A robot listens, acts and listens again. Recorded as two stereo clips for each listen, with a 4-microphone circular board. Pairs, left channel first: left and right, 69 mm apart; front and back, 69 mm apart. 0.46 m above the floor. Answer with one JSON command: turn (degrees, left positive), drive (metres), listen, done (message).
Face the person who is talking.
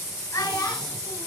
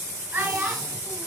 {"turn": 125}
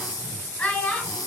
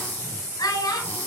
{"turn": 25}
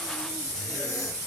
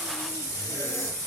{"listen": true}
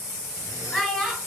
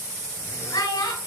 {"turn": 10}
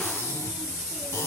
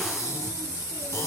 {"listen": true}
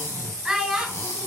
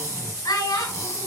{"done": "Found it: a child speaking, straight ahead."}